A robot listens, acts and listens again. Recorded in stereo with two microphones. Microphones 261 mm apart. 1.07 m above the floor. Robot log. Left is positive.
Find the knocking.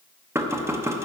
cmd yaw -30
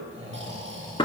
note: So it is at 20° left.
cmd yaw +20
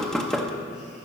end: Facing the knocking, under 1 m away.